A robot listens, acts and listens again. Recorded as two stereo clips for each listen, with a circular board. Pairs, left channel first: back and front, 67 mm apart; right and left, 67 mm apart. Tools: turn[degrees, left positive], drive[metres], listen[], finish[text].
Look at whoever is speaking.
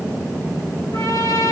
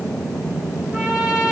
Action: listen[]
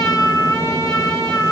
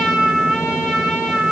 Action: listen[]
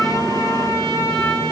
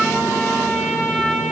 Action: finish[I can't make out anyone speaking, only a trumpet.]